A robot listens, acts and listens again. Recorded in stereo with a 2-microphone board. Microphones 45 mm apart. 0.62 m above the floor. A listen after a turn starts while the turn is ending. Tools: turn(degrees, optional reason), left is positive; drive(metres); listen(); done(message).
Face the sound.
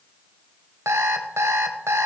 turn(degrees=-90)
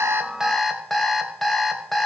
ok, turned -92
done("Found it: an alarm clock, straight ahead.")